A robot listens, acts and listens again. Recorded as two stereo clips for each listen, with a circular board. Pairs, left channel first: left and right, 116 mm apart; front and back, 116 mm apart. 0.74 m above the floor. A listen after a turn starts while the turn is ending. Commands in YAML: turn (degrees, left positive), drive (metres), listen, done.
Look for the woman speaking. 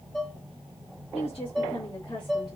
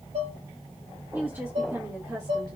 turn: 130
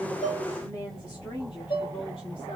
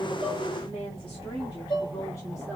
turn: 60
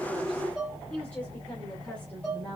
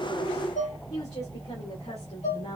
turn: 20
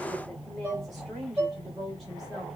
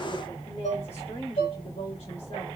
done: "Facing the woman speaking, 2 to 4 m away."